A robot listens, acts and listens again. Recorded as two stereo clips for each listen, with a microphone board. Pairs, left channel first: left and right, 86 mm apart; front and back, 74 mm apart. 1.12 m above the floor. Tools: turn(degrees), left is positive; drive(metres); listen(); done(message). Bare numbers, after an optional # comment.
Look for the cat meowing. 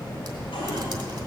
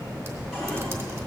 listen()
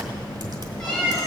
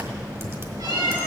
# The cat meowing: 175° left.
turn(175)
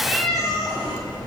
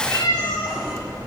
done("Found it: a cat meowing, straight ahead.")